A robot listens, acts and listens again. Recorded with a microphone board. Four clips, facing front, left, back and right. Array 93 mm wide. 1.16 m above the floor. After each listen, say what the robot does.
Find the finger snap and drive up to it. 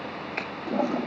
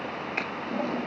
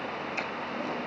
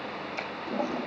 Turn 55° left.
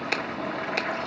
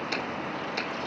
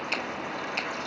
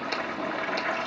Drive 1.0 m forward.
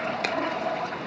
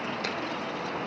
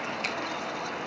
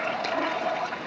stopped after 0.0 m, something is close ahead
Keep listening.
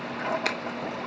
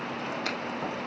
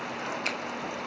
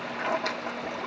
Something is in my way. I am facing the finger snap but have not reached it.